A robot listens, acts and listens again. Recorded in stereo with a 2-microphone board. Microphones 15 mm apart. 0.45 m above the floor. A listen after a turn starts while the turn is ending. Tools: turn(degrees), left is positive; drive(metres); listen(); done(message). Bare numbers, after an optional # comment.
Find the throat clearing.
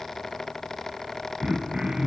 # The throat clearing: about 65° right or 115° right.
turn(-65)
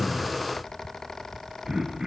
# So it is at 45° right.
turn(-45)
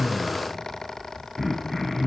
done("Found it: throat clearing, straight ahead.")